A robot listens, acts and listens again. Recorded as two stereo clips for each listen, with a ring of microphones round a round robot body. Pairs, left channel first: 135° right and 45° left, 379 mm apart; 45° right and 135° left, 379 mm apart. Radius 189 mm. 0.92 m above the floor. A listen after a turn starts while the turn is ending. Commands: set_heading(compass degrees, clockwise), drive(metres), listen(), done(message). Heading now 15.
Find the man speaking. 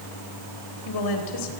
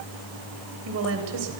set_heading(185)
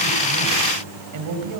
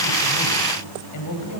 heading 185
done("Facing the man speaking, over 4 m away.")